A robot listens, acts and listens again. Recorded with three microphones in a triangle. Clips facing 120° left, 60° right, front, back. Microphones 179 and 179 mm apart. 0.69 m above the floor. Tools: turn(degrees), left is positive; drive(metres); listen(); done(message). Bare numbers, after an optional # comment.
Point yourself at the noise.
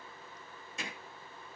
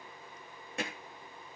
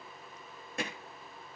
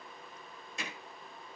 # The hammering: 35° right.
turn(-35)
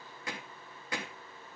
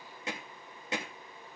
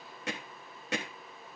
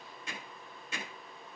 done("Facing the hammering.")